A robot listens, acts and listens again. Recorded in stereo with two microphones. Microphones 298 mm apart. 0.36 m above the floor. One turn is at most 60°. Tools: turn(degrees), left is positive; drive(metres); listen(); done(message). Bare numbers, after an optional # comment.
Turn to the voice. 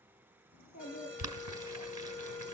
# The child speaking: about 75° left or 105° left.
turn(60)
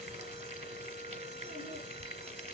listen()
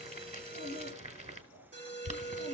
# So it is at 50° left.
turn(50)
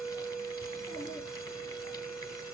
listen()
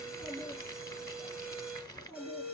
# The child speaking is now 15° left.
turn(15)
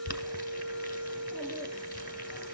listen()
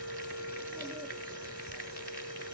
listen()
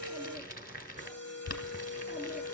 done("Facing where the child speaking came from. I can't hear it now.")